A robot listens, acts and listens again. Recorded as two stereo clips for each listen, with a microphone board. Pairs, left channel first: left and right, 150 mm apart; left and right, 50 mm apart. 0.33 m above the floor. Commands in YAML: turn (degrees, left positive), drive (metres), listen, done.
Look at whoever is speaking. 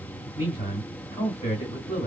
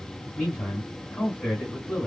turn: 35
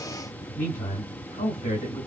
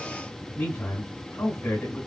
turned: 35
turn: 105
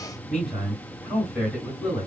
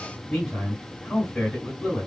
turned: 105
done: "Found it: a man speaking, straight ahead, 2 to 4 m away."